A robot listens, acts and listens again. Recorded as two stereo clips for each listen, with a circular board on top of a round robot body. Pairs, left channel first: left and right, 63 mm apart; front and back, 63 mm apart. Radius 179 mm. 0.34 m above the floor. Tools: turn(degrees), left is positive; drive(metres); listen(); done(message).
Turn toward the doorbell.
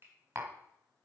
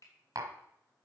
listen()
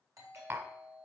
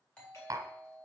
turn(degrees=-70)
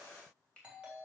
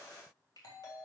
turn(degrees=-15)
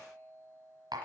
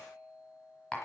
done("Found it: a doorbell, straight ahead.")